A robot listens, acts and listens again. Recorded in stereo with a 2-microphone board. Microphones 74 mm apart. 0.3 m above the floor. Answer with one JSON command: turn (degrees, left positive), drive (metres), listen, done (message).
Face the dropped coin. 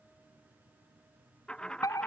{"turn": 30}
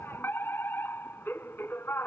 {"listen": true}
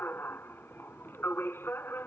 {"done": "I heard a dropped coin, but can't make it out now. It was about 15° right or 135° left."}